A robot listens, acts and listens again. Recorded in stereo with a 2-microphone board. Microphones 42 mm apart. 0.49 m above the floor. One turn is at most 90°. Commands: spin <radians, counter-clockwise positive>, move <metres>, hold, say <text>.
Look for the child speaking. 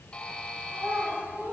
spin -1.13
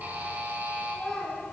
say Facing the child speaking, 2 to 4 m away.